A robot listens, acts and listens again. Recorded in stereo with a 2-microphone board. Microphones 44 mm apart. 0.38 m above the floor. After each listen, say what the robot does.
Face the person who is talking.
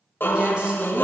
Turn 30° right.
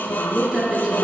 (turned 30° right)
Turn 15° right.
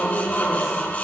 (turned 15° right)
Keep listening.
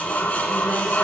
Keep listening.
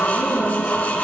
Turn 15° right.
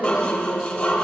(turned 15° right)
Keep listening.
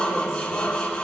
Keep listening.
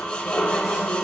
Facing where the woman speaking came from. I can't hear it now.